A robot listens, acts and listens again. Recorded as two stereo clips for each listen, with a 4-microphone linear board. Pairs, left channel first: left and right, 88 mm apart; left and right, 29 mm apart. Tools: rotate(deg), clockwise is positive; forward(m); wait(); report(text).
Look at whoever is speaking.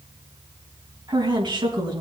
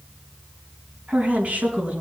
rotate(60)
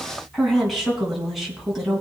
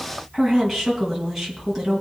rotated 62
report("Facing the woman speaking, 2 to 4 m away.")